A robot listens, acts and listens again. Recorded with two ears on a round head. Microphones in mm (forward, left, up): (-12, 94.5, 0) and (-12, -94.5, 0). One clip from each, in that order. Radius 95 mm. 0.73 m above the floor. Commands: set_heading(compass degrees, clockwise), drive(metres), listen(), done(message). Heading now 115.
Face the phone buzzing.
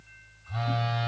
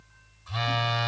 set_heading(205)
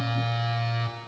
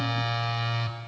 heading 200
set_heading(220)
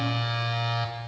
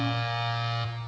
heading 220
done("Found it: a phone buzzing, straight ahead, 1 to 2 m away.")